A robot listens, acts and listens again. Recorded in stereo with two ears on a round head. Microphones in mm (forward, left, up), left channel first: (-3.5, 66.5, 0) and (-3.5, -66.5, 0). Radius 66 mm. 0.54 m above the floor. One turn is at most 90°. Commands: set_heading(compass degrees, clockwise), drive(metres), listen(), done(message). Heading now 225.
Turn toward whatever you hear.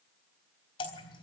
set_heading(190)
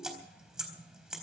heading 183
done("Facing the dripping.")